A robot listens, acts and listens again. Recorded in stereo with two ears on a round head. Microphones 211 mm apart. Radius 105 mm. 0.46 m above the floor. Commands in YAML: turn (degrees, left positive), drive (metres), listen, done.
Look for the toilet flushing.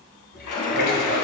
turn: 45
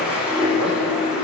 done: "Facing the toilet flushing."